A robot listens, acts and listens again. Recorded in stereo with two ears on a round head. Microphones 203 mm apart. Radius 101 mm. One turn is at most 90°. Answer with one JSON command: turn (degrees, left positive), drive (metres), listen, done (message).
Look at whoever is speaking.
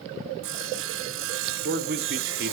{"turn": -45}
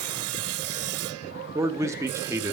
{"turn": -15}
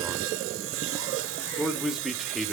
{"done": "Facing the man speaking, 1 to 2 m away."}